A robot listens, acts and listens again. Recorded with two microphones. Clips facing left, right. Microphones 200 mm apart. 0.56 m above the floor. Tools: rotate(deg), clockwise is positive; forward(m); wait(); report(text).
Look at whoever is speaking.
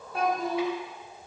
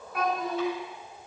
rotate(-30)
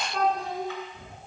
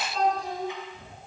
rotate(-120)
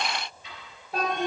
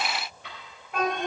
rotate(-35)
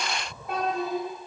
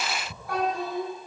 rotate(-25)
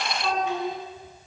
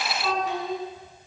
report("Facing the child speaking.")